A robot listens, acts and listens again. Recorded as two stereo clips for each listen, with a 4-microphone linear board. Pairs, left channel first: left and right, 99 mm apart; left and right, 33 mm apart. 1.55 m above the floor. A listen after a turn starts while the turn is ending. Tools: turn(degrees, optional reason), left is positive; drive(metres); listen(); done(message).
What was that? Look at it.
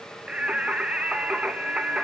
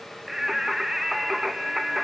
turn(degrees=-30)
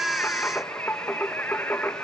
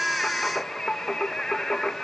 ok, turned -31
turn(degrees=20, reason="So it is at 20° left.")
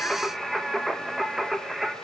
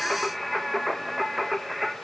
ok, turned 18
done("Found it: singing, straight ahead.")